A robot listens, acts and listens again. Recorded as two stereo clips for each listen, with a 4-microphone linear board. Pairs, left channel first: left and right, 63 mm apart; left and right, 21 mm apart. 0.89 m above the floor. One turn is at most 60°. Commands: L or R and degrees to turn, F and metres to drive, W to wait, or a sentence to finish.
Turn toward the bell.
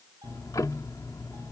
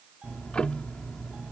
W
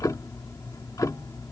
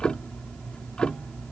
W
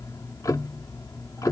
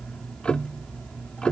I can't make out a bell, only ticking.